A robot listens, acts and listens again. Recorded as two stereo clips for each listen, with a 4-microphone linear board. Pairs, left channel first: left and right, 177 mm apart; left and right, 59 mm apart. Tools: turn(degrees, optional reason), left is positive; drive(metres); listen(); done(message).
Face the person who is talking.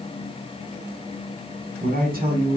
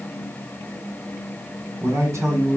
turn(degrees=-55, reason="The man speaking: about 55° right or 125° right.")
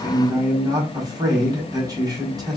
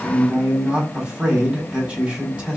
turn(degrees=-25, reason="So it is at 25° right.")
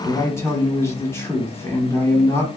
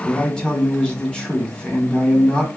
turn(degrees=15, reason="The man speaking is now 15° left.")
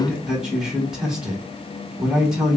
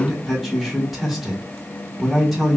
done("Facing the man speaking, 1 to 2 m away.")